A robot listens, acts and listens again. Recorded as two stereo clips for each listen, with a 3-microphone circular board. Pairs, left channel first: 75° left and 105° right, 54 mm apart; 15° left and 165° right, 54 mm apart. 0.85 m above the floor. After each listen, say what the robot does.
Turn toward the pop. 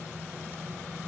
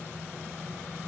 Keep listening.
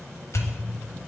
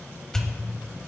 Turn 95° left.
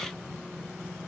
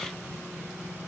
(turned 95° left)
Facing where the pop came from. I can't hear it now.